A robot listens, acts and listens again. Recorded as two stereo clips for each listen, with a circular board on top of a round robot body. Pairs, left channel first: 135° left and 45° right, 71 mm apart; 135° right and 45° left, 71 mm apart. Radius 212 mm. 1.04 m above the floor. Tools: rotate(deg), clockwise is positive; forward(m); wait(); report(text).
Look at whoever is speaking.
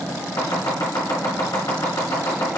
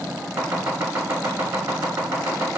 wait()
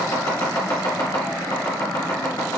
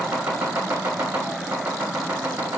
wait()
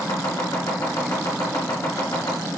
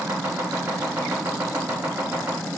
report("I can't make out anyone speaking, only chopping.")